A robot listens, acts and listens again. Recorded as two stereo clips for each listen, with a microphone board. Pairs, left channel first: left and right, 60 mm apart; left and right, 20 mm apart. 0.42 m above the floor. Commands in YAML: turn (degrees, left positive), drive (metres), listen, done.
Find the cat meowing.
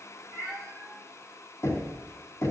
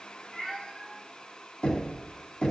turn: 30
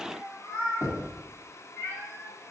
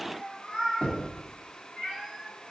turn: 145
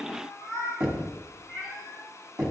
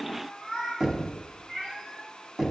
turn: 30
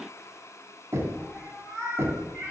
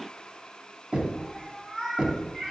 done: "Facing the cat meowing."